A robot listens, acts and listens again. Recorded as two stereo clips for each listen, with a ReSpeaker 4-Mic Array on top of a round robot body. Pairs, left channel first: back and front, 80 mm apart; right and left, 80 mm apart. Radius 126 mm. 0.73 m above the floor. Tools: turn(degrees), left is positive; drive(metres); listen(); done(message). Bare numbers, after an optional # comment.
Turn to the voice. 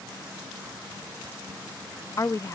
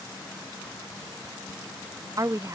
# The woman speaking: 135° left.
turn(135)
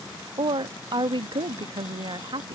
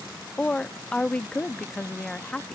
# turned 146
# The woman speaking is now 10° right.
turn(-10)
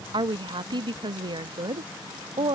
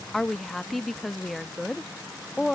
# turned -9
done("Facing the woman speaking.")